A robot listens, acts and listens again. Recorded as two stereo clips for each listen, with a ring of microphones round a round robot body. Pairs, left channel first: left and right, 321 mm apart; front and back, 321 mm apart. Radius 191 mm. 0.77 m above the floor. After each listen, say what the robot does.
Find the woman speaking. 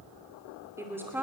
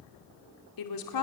Found it: a woman speaking, straight ahead, 2 to 4 m away.